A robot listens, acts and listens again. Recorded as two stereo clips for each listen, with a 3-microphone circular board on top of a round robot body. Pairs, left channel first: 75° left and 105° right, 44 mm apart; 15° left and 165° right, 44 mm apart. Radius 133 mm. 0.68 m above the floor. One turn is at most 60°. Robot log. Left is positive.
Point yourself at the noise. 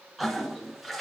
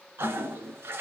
note: The toilet flushing: 165° left.
cmd yaw +60
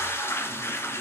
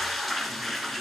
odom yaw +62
note: The toilet flushing is now 105° left.
cmd yaw +60
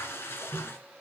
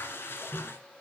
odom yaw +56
note: The toilet flushing is now 50° left.
cmd yaw +50
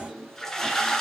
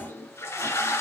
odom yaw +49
end: Found it: a toilet flushing, straight ahead.